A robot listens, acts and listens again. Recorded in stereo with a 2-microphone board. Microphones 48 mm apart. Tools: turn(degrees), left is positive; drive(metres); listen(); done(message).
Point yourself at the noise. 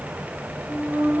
turn(degrees=-60)
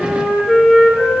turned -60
turn(degrees=-10)
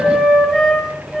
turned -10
done("Found it: a flute, straight ahead.")